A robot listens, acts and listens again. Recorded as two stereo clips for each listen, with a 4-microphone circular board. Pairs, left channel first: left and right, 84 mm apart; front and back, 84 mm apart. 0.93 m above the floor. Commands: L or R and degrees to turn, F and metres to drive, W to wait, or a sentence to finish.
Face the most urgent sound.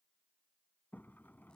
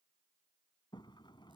W
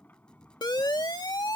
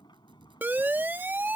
L115
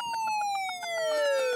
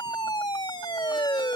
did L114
Found it: a siren, straight ahead.